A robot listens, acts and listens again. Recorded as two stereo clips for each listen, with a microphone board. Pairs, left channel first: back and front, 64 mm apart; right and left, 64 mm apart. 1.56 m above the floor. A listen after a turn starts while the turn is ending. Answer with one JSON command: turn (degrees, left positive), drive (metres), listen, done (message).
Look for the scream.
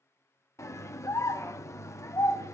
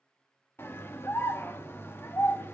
{"turn": -140}
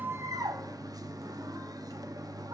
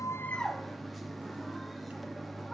{"done": "Found it: a scream, straight ahead, 1 to 2 m away."}